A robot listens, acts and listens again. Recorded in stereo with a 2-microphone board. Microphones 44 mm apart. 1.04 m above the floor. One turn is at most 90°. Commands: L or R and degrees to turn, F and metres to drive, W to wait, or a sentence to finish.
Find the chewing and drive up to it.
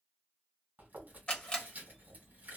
R45
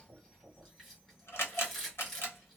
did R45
F1.0
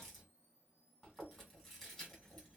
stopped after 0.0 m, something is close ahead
Blocked. The chewing is further on, straight ahead.